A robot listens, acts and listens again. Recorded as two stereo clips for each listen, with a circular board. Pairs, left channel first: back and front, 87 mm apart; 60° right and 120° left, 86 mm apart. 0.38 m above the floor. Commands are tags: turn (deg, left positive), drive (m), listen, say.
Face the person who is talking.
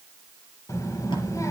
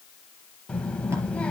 <turn deg="-135"/>
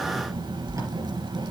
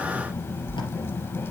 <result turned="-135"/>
<say>Facing the child speaking, 1 to 2 m away.</say>